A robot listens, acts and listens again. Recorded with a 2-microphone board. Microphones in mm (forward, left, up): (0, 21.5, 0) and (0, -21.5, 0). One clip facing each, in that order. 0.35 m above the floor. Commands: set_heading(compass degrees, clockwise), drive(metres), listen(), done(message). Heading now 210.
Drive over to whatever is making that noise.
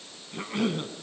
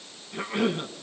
set_heading(240)
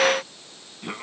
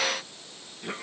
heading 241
set_heading(221)
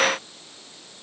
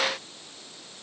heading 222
listen()
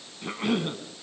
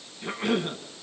drive(1.0)
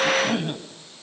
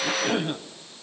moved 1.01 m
drive(1.0)
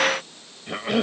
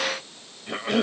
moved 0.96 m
drive(1.0)
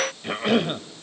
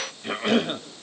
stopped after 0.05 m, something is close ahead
done("Arrived at the cough, straight ahead.")